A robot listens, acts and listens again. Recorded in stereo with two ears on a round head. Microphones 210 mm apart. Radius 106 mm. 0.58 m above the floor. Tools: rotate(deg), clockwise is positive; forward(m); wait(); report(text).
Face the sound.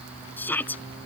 rotate(-30)
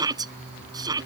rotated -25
rotate(15)
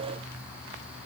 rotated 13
wait()
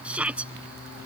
report("Facing the shout.")